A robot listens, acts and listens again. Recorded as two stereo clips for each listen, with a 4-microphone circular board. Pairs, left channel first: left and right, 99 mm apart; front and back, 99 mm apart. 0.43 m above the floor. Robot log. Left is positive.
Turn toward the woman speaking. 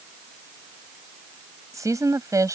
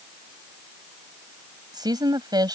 note: The woman speaking: 140° right.
cmd yaw -140
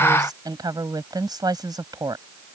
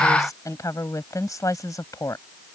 note: The woman speaking is now 50° right.
cmd yaw -50
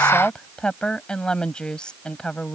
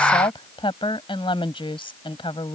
note: The woman speaking is now 10° left.
cmd yaw +10
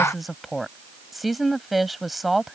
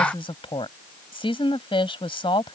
end: Found it: a woman speaking, straight ahead.